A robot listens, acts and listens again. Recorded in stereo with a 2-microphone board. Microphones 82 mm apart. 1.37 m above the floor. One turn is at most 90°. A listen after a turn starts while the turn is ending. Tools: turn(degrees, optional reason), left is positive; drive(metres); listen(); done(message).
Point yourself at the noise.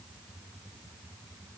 listen()
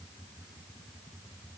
listen()
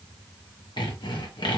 turn(degrees=65, reason="The sawing: about 65° left or 115° left.")
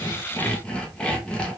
turn(degrees=15, reason="So it is at 15° left.")
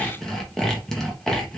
done("Found it: sawing, straight ahead.")